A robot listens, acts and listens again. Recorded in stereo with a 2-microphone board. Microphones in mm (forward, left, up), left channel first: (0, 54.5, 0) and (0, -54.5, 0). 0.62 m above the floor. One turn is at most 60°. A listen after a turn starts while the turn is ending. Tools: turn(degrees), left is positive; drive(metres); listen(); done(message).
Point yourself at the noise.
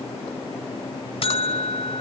turn(degrees=55)
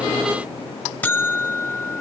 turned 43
turn(degrees=15)
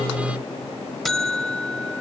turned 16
done("Facing the buzzer, 1 to 2 m away.")